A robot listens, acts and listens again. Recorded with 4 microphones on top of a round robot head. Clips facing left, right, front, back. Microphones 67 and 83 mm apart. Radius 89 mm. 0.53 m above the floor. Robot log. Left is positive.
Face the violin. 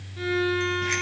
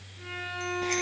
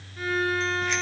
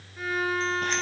note: The violin: 95° left.
cmd yaw +95
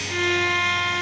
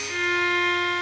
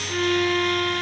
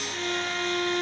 end: Found it: a violin, straight ahead.